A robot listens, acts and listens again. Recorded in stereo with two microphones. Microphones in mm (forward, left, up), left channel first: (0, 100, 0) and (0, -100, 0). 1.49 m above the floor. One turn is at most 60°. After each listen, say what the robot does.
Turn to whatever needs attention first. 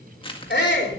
Turn 60° left.
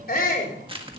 Turn 50° left.
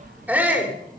Turn 10° right.
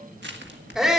Found it: a shout, straight ahead, 2 to 4 m away.